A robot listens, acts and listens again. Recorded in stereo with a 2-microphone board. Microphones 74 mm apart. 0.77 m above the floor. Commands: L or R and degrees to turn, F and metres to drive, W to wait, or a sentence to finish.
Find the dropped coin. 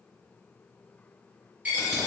R20
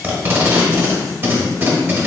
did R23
W
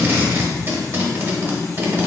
I heard a dropped coin, but can't make it out now. It was about straight ahead or 135° right.